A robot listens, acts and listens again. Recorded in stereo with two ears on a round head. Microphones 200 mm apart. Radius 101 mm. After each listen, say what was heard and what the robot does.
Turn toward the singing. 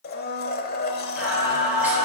Turn 30° right.
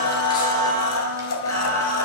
So it is at 10° left. Turn 10° left.
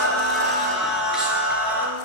The singing is now 10° right. Turn 10° right.
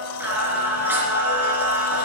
The singing is now 10° right. Turn 10° right.
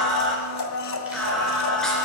Facing the singing, 2 to 4 m away.